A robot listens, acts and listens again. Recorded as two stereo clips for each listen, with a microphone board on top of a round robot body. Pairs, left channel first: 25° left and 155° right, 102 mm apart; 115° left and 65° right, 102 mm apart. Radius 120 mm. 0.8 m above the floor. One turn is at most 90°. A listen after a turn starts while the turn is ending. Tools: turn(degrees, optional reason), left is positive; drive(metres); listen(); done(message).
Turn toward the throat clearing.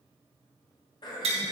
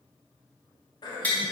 turn(degrees=65, reason="The throat clearing: 65° left.")
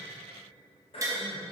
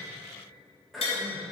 turn(degrees=20, reason="The throat clearing is now 20° left.")
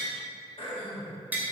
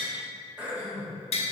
turn(degrees=10, reason="The throat clearing is now 10° left.")
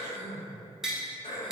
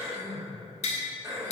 done("Found it: throat clearing, straight ahead, 1 to 2 m away.")